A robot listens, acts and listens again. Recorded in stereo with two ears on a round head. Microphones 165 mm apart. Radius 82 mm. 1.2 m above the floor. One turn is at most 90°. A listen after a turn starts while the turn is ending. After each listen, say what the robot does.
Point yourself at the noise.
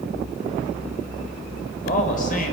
Turn 45° left.
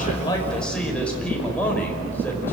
Turn 10° left.
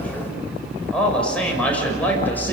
Turn 10° left.
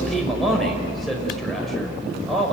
Found it: a man speaking, straight ahead.